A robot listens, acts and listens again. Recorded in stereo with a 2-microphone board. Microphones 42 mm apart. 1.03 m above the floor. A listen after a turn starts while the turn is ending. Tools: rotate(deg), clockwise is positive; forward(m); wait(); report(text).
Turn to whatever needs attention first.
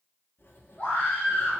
rotate(-50)
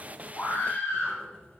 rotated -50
rotate(-85)
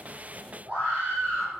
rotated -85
rotate(35)
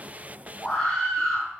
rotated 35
rotate(-15)
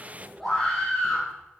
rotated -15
report("Facing the scream, 2 to 4 m away.")